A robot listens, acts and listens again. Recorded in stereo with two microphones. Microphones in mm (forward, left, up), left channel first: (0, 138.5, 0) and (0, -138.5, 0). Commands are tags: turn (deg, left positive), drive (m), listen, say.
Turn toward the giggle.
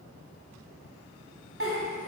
<turn deg="-50"/>
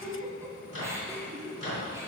<turn deg="-10"/>
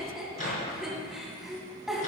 <say>Found it: a giggle, straight ahead.</say>